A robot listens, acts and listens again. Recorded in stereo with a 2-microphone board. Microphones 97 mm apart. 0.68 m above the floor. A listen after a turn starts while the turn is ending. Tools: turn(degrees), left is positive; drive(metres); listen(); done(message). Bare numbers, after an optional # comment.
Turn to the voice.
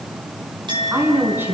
# The woman speaking: about 20° right or 160° right.
turn(-20)
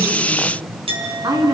# So it is at 140° right.
turn(-140)
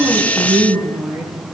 # The woman speaking is now 15° right.
turn(-15)
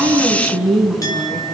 done("Found it: a woman speaking, straight ahead.")